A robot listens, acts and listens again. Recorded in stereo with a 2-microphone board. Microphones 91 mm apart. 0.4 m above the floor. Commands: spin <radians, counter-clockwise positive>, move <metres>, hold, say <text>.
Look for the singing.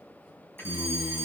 spin 0.44
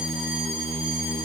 spin 0.52
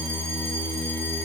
say Found it: singing, straight ahead, 2 to 4 m away.